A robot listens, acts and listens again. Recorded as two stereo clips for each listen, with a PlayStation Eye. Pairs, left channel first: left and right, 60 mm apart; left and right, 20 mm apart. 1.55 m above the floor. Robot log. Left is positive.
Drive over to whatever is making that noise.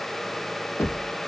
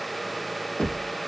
note: The knocking: about 55° left or 125° left.
cmd yaw +55
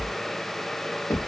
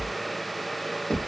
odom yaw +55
note: So it is at 70° left.
cmd yaw +70
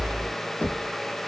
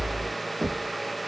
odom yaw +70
note: The knocking is now 30° left.
cmd yaw +30
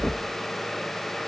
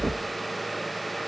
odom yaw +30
cmd idle
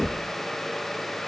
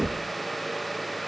note: The knocking is now 10° left.
cmd yaw +10
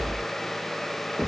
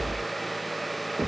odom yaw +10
cmd fwd 1.0
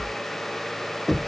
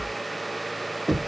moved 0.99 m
cmd fwd 1.0
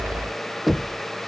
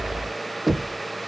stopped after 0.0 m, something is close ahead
end: Arrived at the knocking, straight ahead.